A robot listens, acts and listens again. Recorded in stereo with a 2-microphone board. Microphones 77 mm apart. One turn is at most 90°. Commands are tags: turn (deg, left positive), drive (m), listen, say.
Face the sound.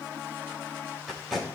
<turn deg="-30"/>
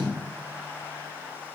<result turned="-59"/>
<turn deg="55"/>
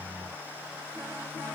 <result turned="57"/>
<listen/>
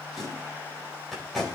<say>Facing the tape being pulled, over 4 m away.</say>